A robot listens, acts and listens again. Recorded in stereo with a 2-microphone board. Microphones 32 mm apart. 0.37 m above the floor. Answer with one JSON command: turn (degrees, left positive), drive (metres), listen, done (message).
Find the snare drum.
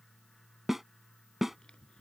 {"turn": -30}
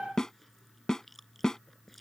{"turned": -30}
{"turn": 15}
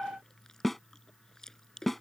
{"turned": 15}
{"done": "Facing the snare drum."}